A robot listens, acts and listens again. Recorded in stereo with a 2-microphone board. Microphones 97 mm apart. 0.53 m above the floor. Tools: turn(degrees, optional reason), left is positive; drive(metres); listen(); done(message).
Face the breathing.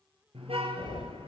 turn(degrees=60, reason="The breathing: about 60° left or 120° left.")
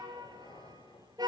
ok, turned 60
turn(degrees=55, reason="So it is at 55° left.")
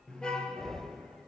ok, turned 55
done("Facing the breathing, 1 to 2 m away.")